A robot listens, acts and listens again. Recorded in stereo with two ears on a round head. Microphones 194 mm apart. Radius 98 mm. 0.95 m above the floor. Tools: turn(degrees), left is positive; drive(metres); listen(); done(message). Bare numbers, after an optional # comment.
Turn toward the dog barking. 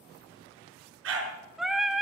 # The dog barking: about 70° right or 110° right.
turn(-70)
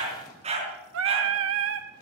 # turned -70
# So it is at 30° right.
turn(-30)
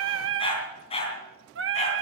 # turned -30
# The dog barking is now 30° left.
turn(30)
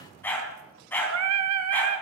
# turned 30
# The dog barking is now 10° left.
turn(10)
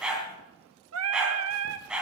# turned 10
done("Facing the dog barking.")